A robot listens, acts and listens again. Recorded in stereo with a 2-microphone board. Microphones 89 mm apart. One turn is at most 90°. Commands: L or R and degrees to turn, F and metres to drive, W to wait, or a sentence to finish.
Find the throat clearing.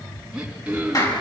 R30
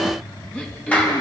L15
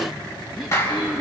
Found it: throat clearing, straight ahead, 2 to 4 m away.